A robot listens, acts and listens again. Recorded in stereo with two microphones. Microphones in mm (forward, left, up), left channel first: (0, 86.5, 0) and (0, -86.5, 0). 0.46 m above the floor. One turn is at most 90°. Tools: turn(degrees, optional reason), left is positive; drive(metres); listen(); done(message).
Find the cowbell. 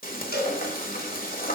turn(degrees=70, reason="The cowbell: about 70° left or 110° left.")
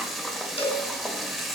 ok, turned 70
turn(degrees=35, reason="So it is at 35° left.")
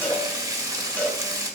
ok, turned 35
turn(degrees=10, reason="The cowbell is now 10° left.")
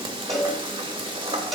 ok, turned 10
done("Facing the cowbell.")